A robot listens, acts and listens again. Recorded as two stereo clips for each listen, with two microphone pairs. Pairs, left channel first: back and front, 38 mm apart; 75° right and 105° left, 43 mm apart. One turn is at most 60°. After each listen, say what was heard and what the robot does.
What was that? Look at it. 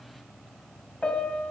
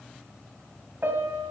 The piano: 120° left. Turn 60° left.
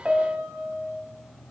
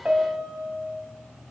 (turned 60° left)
The piano is now 55° left. Turn 55° left.
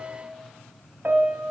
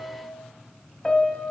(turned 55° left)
Found it: a piano, straight ahead, under 1 m away.